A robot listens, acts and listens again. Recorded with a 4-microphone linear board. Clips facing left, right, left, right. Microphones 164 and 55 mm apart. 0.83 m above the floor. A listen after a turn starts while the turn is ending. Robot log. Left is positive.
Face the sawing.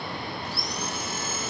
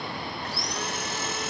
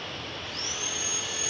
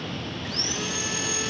note: The sawing: about 75° right or 105° right.
cmd yaw -75
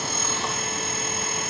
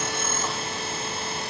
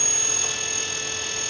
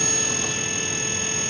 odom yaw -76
note: So it is at 30° right.
cmd yaw -30
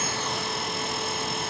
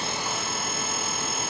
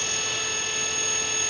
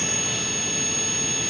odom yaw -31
end: Found it: sawing, straight ahead, 2 to 4 m away.